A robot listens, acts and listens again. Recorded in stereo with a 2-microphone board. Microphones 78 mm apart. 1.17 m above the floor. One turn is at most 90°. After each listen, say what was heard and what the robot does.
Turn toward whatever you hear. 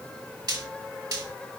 The frying: about 60° right or 120° right. Turn 60° right.
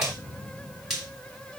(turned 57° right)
Facing the frying, 2 to 4 m away.